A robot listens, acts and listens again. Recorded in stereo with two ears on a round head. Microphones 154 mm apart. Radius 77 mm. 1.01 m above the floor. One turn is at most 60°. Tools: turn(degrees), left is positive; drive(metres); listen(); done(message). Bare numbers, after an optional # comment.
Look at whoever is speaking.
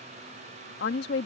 # The woman speaking: about 70° left or 110° left.
turn(60)
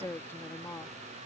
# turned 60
# So it is at 15° left.
turn(15)
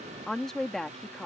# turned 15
done("Found it: a woman speaking, straight ahead.")